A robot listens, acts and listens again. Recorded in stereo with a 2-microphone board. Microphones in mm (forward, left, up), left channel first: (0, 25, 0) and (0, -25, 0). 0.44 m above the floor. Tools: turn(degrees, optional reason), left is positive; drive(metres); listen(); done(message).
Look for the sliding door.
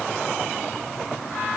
listen()
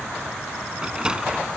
turn(degrees=-20, reason="The sliding door: about 20° right or 160° right.")
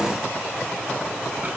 listen()
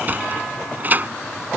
turn(degrees=-140, reason="So it is at 140° right.")
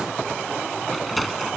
done("Facing the sliding door.")